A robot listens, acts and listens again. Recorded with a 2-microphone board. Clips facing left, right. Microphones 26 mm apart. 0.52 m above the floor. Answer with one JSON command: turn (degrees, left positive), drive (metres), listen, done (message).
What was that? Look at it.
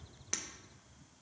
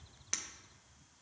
{"turn": -30}
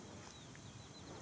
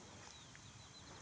{"listen": true}
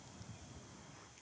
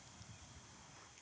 {"done": "I heard breaking glass, but can't make it out now. It was about 25° left or 145° right."}